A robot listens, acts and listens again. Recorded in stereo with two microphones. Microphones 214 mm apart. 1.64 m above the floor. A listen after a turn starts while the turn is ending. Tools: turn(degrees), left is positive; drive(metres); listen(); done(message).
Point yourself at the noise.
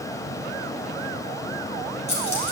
turn(degrees=30)
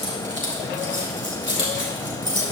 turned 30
turn(degrees=120)
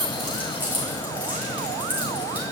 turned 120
turn(degrees=-10)
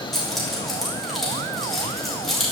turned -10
done("Facing the keys jangling.")